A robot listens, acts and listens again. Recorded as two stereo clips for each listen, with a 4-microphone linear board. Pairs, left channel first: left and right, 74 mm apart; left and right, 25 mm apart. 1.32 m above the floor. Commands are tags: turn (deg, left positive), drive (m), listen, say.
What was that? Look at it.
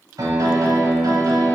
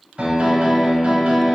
<turn deg="-55"/>
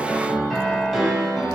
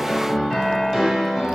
<say>Facing the piano, under 1 m away.</say>